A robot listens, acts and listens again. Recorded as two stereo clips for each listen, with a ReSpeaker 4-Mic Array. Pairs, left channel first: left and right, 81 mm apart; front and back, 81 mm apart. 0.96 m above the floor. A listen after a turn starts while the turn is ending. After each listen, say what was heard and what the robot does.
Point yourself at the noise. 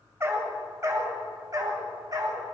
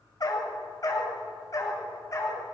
The dog barking: 50° right. Turn 50° right.
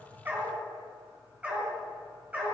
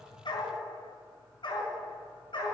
The dog barking is now 20° right. Turn 20° right.
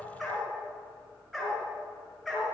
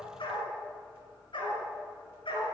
Facing the dog barking, over 4 m away.